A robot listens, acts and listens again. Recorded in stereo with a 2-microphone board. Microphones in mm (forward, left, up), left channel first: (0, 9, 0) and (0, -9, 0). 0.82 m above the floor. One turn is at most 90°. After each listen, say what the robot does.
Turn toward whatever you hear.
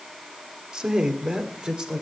Turn 50° right.
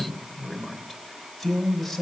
Found it: a man speaking, straight ahead.